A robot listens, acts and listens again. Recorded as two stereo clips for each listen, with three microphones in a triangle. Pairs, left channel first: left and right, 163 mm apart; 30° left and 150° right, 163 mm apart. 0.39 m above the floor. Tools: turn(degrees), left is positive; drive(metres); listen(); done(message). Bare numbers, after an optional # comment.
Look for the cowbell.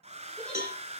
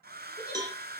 # The cowbell: 85° right.
turn(-85)
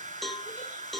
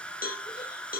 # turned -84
done("Facing the cowbell.")